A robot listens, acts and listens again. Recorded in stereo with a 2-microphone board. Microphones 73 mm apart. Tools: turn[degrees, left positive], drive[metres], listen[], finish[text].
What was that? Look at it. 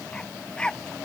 Action: turn[30]
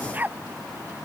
Thought: So it is at 25° right.
Action: turn[-25]
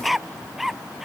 Action: finish[Facing the dog barking.]